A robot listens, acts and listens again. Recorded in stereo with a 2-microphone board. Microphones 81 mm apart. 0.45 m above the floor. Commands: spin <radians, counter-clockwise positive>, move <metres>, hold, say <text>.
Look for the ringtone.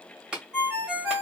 spin -0.52
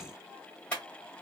hold
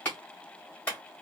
hold
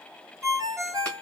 spin -2.44
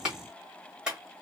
hold
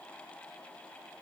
hold
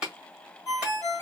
spin 0.61
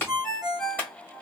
say Found it: a ringtone, straight ahead, 1 to 2 m away.